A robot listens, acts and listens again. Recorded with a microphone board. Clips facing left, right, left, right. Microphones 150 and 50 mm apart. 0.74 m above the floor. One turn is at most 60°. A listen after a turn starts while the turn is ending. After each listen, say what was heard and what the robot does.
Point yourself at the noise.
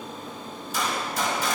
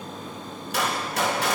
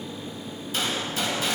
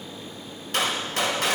The gunshot: about 65° right or 115° right. Turn 60° right.
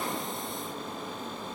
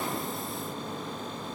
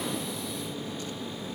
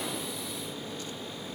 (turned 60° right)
Keep listening.
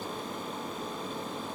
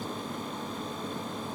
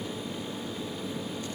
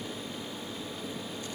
I heard a gunshot, but can't make it out now. It was about 5° right or 55° right.